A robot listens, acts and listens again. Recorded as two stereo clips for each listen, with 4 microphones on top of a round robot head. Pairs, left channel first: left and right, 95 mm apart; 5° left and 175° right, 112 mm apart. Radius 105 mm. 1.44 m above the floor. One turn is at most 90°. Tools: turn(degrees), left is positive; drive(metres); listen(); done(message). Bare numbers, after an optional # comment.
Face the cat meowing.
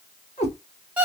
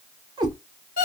# The cat meowing: 135° left.
turn(90)
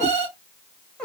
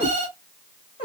# The cat meowing is now 10° left.
turn(10)
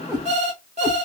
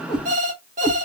# The cat meowing is now 15° right.
turn(-15)
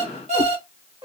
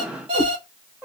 # The cat meowing is now 100° right.
turn(-90)
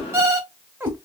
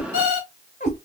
# The cat meowing is now 25° right.
turn(-25)
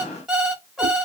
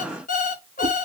listen()
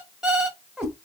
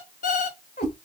done("Found it: a cat meowing, straight ahead.")